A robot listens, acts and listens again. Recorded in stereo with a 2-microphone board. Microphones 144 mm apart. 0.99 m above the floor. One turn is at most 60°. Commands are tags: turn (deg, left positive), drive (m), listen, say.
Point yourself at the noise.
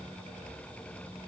<listen/>
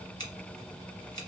<turn deg="25"/>
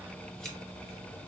<listen/>
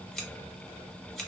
<say>Found it: scissors, straight ahead.</say>